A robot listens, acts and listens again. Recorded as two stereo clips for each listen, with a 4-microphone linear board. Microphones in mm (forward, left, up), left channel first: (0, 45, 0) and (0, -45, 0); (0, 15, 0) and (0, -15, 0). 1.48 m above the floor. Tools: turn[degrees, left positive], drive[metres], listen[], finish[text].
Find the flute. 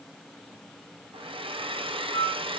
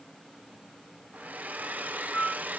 Action: turn[90]
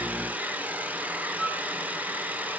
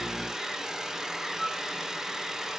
Action: finish[Found it: a flute, straight ahead.]